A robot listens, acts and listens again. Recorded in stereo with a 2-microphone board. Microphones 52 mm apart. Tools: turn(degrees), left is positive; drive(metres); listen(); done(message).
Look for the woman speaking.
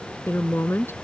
turn(degrees=55)
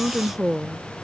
done("Found it: a woman speaking, straight ahead.")